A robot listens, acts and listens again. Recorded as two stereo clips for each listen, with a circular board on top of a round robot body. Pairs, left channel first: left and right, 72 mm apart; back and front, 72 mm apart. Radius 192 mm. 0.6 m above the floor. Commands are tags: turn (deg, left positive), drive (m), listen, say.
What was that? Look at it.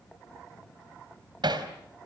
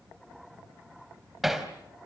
<turn deg="-85"/>
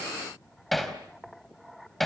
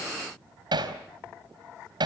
<say>Facing the hammering, 2 to 4 m away.</say>